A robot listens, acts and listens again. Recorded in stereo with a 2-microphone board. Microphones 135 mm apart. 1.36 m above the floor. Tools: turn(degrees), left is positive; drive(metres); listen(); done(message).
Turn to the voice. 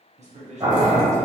turn(degrees=-60)
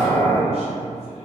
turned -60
listen()
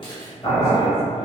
listen()
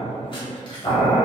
done("I heard a man speaking, but can't make it out now. It was about straight ahead or 60° right.")